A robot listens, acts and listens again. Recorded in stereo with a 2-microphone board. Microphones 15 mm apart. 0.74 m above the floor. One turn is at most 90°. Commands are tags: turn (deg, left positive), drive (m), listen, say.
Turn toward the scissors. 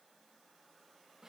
<listen/>
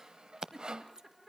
<turn deg="-50"/>
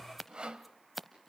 <turn deg="-10"/>
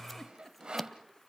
<listen/>
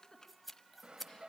<say>Facing the scissors.</say>